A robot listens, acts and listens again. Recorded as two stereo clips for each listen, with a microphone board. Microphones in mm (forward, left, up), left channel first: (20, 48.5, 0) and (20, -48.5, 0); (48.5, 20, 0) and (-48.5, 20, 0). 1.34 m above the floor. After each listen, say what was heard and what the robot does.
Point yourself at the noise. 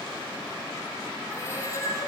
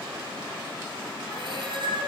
The cat meowing: 150° left. Turn 150° left.
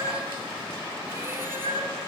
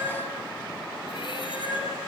The cat meowing is now 25° right. Turn 25° right.
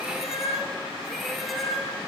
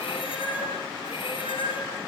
Found it: a cat meowing, straight ahead.